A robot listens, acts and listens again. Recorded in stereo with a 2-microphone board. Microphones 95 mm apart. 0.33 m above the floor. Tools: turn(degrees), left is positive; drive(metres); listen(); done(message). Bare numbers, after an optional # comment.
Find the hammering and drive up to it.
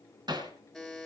# The hammering: about 50° right or 130° right.
turn(-50)
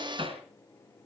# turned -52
# So it is at 75° right.
turn(-75)
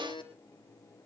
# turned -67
# Nothing new. It was at 10° right.
turn(-10)
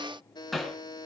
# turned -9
drive(1.0)
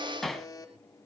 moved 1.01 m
drive(1.0)
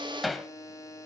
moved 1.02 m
drive(1.0)
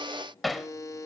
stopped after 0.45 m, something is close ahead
done("I am next to the hammering.")